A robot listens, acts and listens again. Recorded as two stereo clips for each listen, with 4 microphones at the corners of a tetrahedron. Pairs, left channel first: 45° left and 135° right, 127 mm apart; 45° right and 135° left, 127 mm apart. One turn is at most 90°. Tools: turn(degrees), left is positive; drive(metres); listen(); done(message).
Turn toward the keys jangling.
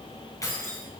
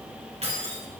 turn(degrees=90)
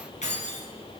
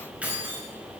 turn(degrees=60)
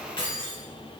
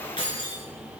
done("Found it: keys jangling, straight ahead.")